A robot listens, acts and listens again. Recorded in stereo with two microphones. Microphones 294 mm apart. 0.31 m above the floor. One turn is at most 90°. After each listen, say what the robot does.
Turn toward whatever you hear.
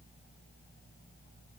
Keep listening.
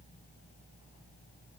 Keep listening.
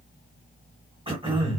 Turn 20° right.
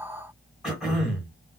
Found it: throat clearing, straight ahead, 2 to 4 m away.